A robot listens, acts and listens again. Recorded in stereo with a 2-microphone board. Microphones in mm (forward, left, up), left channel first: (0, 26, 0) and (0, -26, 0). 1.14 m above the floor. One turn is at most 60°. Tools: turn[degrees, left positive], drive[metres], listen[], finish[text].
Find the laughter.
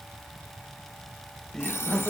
Action: turn[30]
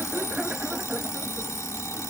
Thought: So it is at 15° right.
Action: turn[-15]
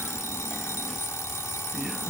Action: listen[]
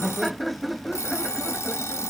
Action: finish[Found it: laughter, straight ahead.]